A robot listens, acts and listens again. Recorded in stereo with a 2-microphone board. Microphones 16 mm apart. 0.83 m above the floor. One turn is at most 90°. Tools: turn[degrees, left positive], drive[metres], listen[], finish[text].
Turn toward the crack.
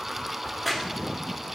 Action: turn[-30]
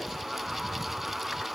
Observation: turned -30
Action: listen[]
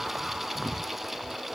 Action: finish[I heard a crack, but can't make it out now. It was about 25° left or 145° right.]